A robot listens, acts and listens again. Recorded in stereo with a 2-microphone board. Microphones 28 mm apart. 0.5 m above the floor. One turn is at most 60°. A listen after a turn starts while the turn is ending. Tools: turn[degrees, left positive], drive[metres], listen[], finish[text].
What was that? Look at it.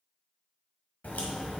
Thought: The crack: about 70° left or 110° left.
Action: turn[60]
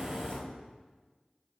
Thought: So it is at 50° left.
Action: turn[50]
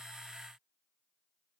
Action: finish[I heard a crack from this way, but can't make it out now.]